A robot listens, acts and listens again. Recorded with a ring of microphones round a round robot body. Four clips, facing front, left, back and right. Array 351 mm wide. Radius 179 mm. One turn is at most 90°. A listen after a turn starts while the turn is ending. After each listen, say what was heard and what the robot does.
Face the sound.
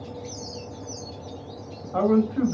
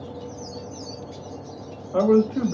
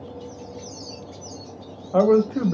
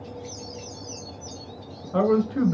The man speaking: 165° right. Turn 90° right.
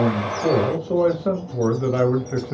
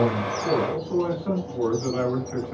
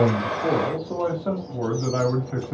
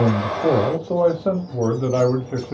The man speaking is now 55° right. Turn 55° right.
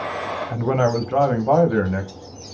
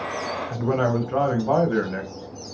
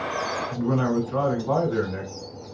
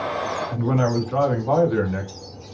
The man speaking is now 10° left. Turn 10° left.
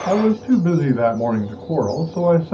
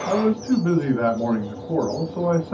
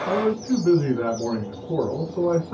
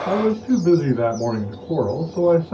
Facing the man speaking, 2 to 4 m away.